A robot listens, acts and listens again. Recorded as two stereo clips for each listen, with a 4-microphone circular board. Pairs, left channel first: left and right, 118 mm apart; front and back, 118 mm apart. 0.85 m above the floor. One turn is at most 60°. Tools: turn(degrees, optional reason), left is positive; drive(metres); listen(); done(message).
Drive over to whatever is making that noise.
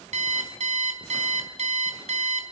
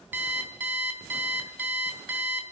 turn(degrees=-60, reason="The alarm clock: 105° right.")
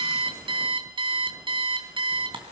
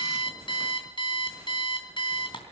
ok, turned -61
turn(degrees=-45, reason="The alarm clock is now 45° right.")
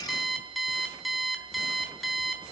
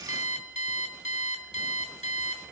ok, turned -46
drive(metres=1.0)
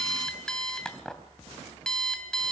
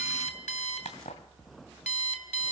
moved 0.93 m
drive(metres=1.0)
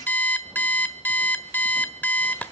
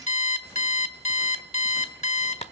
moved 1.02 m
turn(degrees=15, reason="The alarm clock is now 15° left.")
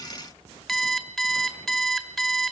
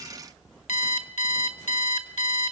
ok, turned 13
drive(metres=1.0)
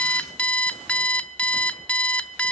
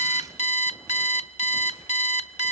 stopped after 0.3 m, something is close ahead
turn(degrees=10, reason="The alarm clock is now 10° left.")
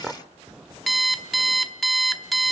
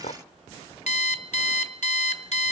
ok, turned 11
done("I am next to the alarm clock.")